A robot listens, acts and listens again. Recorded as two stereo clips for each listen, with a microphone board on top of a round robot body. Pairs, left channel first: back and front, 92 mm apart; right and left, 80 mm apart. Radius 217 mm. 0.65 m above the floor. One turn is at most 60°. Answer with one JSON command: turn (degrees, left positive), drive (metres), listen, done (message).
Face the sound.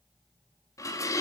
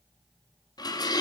{"turn": -60}
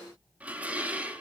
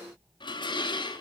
{"turn": -60}
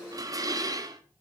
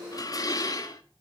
{"turn": -50}
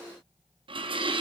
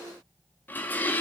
{"turn": -25}
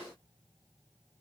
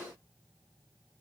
{"listen": true}
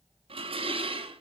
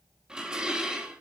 {"turn": 10}
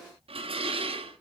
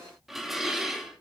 {"done": "Facing the dishes clattering, 1 to 2 m away."}